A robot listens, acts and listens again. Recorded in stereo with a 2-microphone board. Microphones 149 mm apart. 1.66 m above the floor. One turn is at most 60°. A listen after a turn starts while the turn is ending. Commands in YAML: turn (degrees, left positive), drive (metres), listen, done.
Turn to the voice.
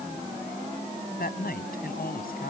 turn: 60
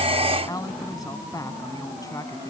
turn: 25
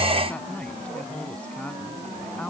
listen: true
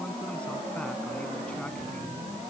listen: true
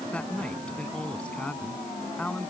turn: 10
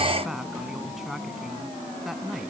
done: "Found it: a woman speaking, straight ahead."